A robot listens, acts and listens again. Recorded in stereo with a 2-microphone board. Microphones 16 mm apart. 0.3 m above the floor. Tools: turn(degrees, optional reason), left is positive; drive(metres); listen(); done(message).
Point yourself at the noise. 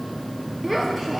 turn(degrees=30)
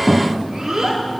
turn(degrees=-30, reason="So it is at 30° right.")
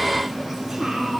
turn(degrees=-10, reason="The child speaking is now 10° right.")
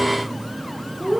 done("Found it: a child speaking, straight ahead, 2 to 4 m away.")